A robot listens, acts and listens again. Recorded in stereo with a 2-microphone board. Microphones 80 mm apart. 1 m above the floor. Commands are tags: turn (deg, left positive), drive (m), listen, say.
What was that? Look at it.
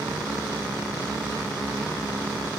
<listen/>
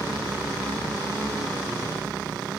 <listen/>
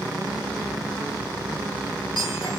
<turn deg="75"/>
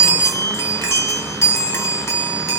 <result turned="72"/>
<turn deg="35"/>
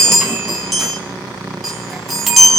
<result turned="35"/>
<say>Found it: a chime, straight ahead, over 4 m away.</say>